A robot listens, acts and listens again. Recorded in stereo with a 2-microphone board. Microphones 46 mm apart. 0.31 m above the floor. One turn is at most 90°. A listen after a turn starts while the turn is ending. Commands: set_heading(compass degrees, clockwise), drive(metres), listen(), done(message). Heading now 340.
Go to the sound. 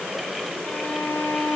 set_heading(315)
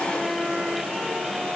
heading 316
drive(1.0)
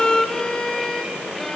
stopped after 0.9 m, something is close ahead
set_heading(301)
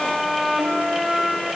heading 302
done("Arrived at the violin, straight ahead.")